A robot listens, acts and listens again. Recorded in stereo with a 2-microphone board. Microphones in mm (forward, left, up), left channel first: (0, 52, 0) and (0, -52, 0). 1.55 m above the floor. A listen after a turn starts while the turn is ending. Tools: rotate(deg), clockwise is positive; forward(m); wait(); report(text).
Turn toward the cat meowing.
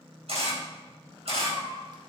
rotate(60)
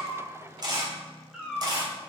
rotate(10)
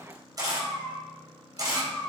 report("Facing the cat meowing, 2 to 4 m away.")